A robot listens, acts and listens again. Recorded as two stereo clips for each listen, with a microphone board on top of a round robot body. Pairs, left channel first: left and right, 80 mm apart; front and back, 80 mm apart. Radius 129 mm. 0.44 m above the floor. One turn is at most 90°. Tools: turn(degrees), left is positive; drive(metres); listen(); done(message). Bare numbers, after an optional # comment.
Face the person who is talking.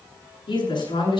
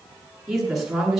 # The woman speaking: 95° left.
turn(90)
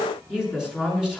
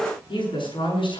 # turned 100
done("Found it: a woman speaking, straight ahead, over 4 m away.")